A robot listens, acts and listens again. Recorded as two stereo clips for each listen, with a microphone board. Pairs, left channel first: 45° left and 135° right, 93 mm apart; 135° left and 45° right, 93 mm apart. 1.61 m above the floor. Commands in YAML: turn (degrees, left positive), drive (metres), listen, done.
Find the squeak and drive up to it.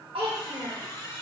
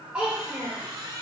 drive: 1.0
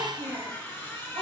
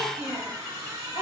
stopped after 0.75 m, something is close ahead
done: "I am next to the squeak."